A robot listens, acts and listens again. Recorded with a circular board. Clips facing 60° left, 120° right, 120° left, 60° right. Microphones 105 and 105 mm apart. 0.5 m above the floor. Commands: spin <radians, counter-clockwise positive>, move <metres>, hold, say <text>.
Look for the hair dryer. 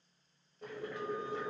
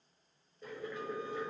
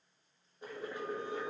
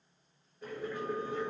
hold
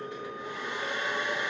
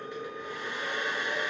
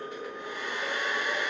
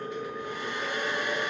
spin 2.01
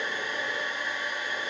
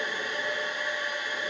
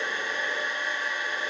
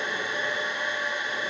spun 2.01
spin 0.26
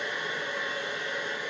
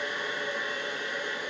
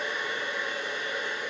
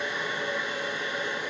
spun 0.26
say Facing the hair dryer.